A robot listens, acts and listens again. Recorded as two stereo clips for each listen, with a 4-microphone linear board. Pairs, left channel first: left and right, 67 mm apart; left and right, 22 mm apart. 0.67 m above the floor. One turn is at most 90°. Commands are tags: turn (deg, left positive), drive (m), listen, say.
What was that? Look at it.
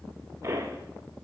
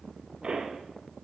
<turn deg="-45"/>
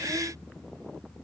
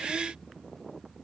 <listen/>
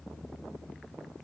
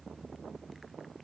<say>I heard a pop, but can't make it out now. It was about straight ahead or 90° right.</say>